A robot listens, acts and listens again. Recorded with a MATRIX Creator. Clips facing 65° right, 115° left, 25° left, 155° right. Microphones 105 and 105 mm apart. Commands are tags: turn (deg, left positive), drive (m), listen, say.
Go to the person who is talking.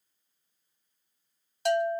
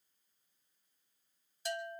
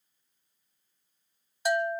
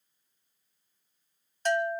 <listen/>
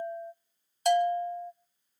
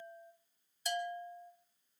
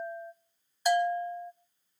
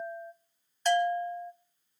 <listen/>
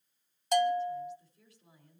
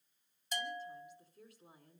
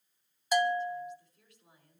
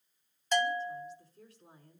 <turn deg="145"/>
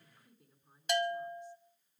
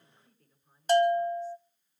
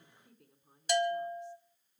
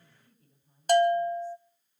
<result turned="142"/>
<drive m="1.0"/>
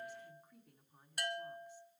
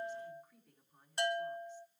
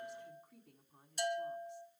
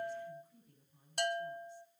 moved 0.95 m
<turn deg="10"/>
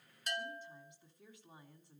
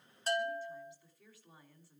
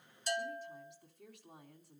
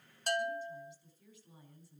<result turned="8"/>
<drive m="1.0"/>
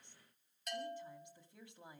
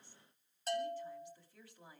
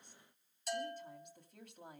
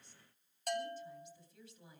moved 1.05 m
<drive m="1.0"/>
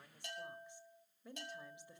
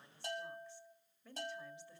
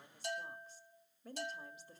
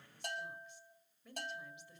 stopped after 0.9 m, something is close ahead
<say>I am next to the woman speaking.</say>